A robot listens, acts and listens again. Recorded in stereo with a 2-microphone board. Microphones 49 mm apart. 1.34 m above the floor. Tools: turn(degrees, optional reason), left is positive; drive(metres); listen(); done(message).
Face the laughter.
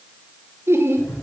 turn(degrees=-60, reason="The laughter: about 60° right or 120° right.")
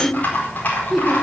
done("Found it: laughter, straight ahead.")